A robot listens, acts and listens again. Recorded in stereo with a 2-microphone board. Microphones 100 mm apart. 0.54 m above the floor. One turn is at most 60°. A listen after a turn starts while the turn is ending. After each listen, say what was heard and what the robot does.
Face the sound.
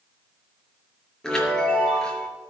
Turn 30° left.
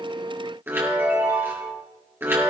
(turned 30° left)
So it is at 20° right. Turn 20° right.
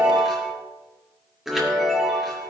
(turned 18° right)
Found it: a chime, straight ahead, over 4 m away.